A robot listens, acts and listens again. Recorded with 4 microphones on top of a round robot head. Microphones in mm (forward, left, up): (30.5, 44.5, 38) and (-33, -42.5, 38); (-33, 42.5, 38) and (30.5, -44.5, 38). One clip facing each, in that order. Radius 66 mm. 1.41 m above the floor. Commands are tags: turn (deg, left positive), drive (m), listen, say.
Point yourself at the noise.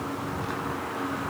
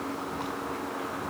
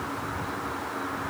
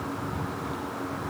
<listen/>
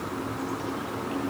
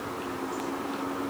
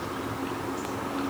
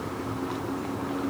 <listen/>
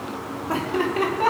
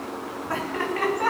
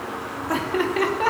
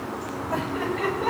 <turn deg="120"/>
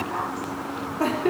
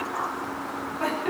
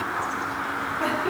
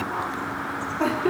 <say>Facing the laughter.</say>